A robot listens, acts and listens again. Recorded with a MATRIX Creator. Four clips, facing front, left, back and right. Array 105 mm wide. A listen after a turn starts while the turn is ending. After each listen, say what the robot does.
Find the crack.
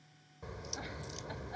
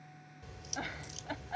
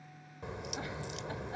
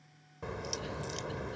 Turn 105° right.
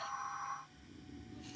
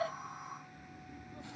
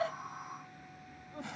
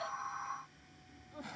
Facing where the crack came from. I can't hear it now.